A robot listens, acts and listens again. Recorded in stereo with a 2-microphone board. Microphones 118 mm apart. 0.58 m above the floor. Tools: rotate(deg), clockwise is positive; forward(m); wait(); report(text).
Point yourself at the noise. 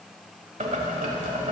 rotate(90)
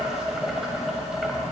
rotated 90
report("Found it: boiling, straight ahead, 1 to 2 m away.")